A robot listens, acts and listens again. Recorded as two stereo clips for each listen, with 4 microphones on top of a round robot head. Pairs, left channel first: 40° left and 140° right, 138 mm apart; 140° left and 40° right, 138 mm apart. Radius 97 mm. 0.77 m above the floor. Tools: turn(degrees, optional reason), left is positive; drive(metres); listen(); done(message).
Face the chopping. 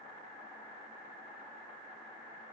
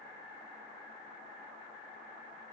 listen()
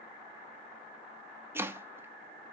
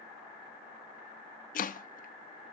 turn(degrees=145, reason="The chopping: 145° left.")
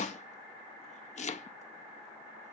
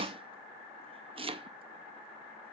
turn(degrees=10, reason="The chopping is now 10° left.")
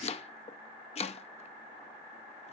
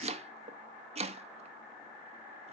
done("Facing the chopping.")